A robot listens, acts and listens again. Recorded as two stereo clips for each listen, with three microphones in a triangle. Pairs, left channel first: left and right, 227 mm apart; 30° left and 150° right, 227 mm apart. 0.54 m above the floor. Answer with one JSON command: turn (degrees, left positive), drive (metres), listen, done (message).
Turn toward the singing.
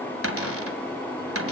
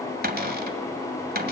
{"listen": true}
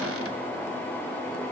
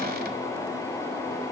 {"listen": true}
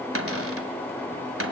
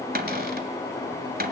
{"done": "I can't make out singing to turn to."}